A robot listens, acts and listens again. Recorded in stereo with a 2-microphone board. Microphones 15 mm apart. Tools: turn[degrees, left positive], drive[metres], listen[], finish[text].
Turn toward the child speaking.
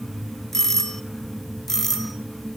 Action: listen[]
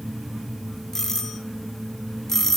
Action: listen[]
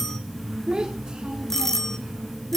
Thought: The child speaking: about 55° right or 125° right.
Action: turn[-55]
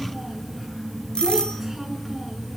Action: listen[]
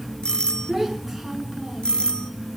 Action: finish[Facing the child speaking, over 4 m away.]